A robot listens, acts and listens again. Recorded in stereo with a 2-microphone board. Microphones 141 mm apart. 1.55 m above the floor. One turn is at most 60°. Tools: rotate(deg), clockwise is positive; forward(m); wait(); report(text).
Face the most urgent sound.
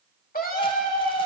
rotate(-60)
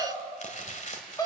rotate(-25)
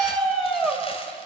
report("Facing the scream, 2 to 4 m away.")